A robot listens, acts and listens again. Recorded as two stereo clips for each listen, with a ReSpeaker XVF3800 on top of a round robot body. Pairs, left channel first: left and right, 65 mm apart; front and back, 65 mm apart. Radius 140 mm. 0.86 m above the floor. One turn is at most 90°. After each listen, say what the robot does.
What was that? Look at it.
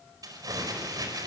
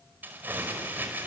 Turn 90° right.
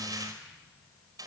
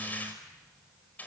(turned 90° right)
Turn 65° right.
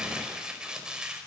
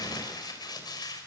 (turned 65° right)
Turn 10° right.
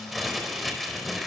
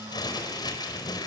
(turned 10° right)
Facing the crumpling, over 4 m away.